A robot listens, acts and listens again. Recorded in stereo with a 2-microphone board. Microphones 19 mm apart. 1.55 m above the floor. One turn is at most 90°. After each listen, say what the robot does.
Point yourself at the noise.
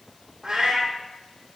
Turn 60° right.
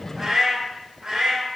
Turn 40° right.
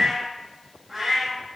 Turn 10° right.
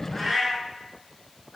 Facing the cat meowing.